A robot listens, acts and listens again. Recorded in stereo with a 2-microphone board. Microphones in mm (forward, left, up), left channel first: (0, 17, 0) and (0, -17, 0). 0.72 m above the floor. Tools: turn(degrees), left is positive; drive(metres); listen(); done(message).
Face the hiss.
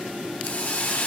turn(degrees=65)
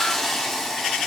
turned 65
turn(degrees=15)
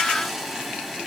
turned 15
done("Found it: a hiss, straight ahead.")